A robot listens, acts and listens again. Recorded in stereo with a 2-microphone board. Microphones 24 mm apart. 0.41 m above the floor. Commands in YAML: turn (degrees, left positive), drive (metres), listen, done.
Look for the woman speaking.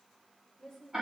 turn: 20
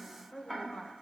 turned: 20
turn: 40
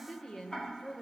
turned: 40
turn: 30
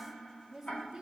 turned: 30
turn: -10
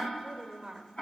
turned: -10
turn: -25
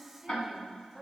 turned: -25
turn: -10
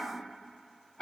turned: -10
listen: true
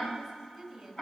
done: "Facing the woman speaking, 1 to 2 m away."